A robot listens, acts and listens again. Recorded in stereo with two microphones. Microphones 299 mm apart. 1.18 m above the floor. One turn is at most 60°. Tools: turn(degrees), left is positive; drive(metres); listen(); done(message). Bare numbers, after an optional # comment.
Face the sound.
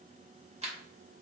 # The camera shutter: about 20° right or 160° right.
turn(-20)
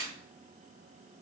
# So it is at 135° right.
turn(-60)
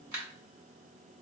# The camera shutter is now 85° right.
turn(-60)
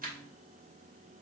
# The camera shutter is now 30° right.
turn(-30)
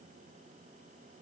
listen()
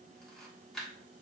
done("Found it: a camera shutter, straight ahead, 1 to 2 m away.")